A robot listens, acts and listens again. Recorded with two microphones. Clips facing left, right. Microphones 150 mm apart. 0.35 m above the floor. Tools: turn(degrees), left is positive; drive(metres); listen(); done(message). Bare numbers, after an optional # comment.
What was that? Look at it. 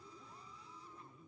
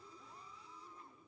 listen()
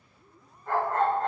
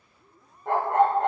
# The dog barking: about 65° right or 115° right.
turn(-65)
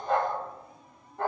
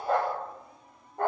# So it is at 50° right.
turn(-50)
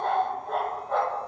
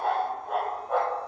# The dog barking is now 10° right.
turn(-10)
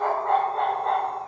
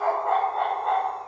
done("Found it: a dog barking, straight ahead, 2 to 4 m away.")